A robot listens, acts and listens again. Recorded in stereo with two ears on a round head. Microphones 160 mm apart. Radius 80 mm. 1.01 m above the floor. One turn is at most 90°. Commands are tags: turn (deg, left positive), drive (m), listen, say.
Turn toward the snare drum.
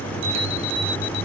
<listen/>
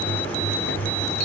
<listen/>
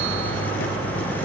<say>I can't make out a snare drum to turn to.</say>